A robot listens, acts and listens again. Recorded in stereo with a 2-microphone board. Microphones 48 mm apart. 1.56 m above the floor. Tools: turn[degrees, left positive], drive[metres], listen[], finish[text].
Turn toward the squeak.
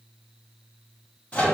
Action: listen[]
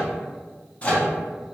Action: listen[]
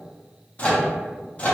Action: finish[I can't make out a squeak to turn to.]